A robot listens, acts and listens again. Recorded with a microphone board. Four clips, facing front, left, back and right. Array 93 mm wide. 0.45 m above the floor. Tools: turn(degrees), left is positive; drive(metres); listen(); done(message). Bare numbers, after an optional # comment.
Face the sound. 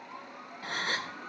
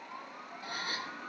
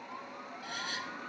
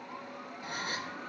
done("Facing the gasp, under 1 m away.")